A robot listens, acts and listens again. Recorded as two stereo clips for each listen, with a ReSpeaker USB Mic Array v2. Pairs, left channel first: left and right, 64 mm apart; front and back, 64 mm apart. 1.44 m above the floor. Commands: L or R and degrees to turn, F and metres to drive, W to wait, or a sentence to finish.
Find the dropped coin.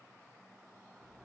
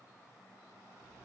W
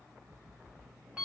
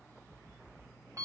W
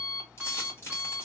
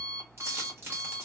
L135
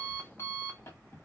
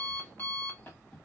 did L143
R10
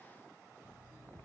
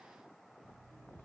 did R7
Facing where the dropped coin came from. I can't hear it now.